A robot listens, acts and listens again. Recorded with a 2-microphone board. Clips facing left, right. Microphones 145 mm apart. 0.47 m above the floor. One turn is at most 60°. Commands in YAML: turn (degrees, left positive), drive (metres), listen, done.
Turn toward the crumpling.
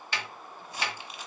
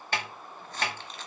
turn: 30
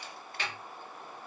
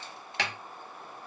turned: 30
listen: true
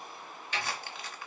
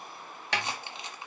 turn: -20
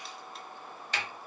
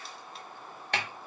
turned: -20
listen: true
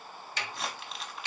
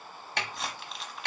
done: "Found it: crumpling, straight ahead, under 1 m away."